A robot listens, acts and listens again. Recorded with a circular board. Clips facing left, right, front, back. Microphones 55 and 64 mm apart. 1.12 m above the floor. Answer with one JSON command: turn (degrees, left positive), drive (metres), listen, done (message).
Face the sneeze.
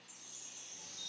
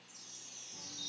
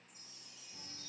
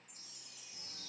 {"listen": true}
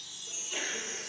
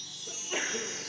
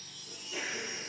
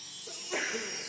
{"turn": -150}
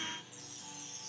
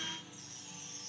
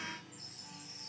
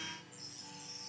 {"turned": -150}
{"done": "I heard a sneeze from this way, but can't make it out now."}